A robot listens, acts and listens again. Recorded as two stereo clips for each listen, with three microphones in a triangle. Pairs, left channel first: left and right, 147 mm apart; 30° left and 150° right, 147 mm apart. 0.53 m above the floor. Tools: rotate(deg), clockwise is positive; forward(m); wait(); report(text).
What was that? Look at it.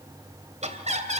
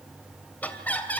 rotate(50)
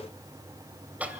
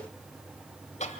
rotate(10)
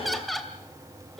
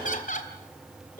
report("Facing the laughter, 2 to 4 m away.")